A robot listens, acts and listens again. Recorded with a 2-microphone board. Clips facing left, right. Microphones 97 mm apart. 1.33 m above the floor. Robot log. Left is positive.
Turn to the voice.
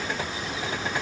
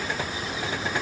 cmd idle
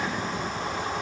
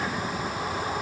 cmd idle
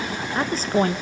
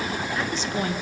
note: The woman speaking: about 40° left or 140° left.
cmd yaw +40
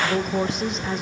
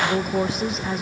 end: Found it: a woman speaking, straight ahead.